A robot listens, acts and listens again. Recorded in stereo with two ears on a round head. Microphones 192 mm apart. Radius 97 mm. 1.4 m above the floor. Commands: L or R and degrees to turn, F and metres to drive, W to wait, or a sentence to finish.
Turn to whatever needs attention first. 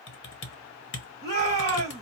L20
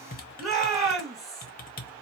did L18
Facing the shout, 2 to 4 m away.